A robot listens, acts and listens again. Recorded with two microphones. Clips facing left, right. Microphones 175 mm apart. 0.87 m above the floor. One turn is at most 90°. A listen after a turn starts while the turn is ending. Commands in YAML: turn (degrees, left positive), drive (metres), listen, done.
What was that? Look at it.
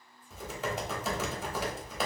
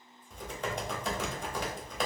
turn: 30
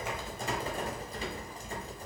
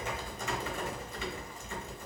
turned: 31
turn: 90
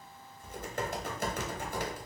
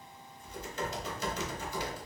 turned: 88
turn: 55
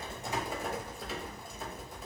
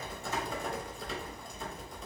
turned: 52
done: "Found it: typing on a keyboard, straight ahead, under 1 m away."